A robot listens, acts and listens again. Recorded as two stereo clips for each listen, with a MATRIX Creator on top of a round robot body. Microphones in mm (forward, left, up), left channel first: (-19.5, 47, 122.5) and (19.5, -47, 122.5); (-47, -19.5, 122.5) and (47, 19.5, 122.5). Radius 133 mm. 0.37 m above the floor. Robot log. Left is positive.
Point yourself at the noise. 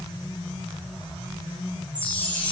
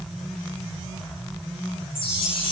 note: The chime: 175° right.
cmd yaw -175
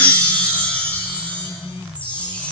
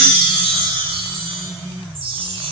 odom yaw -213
note: The chime is now 40° left.
cmd yaw +40
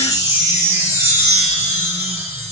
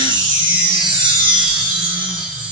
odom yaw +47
note: The chime is now 10° right.
cmd yaw -10
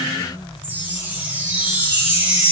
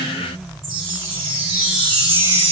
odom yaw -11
end: Facing the chime.